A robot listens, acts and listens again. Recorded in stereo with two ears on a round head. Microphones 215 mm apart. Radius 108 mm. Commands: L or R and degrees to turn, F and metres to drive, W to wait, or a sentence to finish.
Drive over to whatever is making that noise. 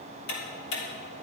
L50
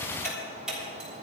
F1.0
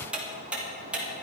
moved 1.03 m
F1.0
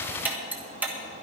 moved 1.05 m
R10
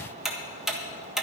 F1.0
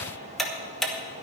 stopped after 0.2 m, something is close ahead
Arrived at the ticking, straight ahead.